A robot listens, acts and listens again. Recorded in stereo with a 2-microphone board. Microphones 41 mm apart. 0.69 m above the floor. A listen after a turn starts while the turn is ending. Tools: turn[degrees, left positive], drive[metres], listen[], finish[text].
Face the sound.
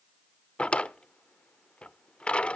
Thought: The drawer: about 30° left or 150° left.
Action: turn[30]
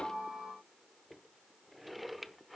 Action: finish[Facing the drawer, under 1 m away.]